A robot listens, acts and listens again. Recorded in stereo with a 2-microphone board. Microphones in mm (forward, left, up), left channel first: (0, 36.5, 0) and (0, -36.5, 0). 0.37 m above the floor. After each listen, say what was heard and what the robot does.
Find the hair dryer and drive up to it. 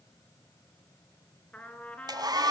The hair dryer: about 70° right or 110° right. Turn 70° right.
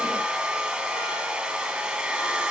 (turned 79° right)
So it is at 10° right. Turn 10° right.
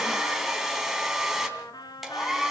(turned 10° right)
Drive 1.0 m forward.
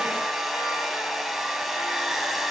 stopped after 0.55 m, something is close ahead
Blocked. The hair dryer is further on, straight ahead.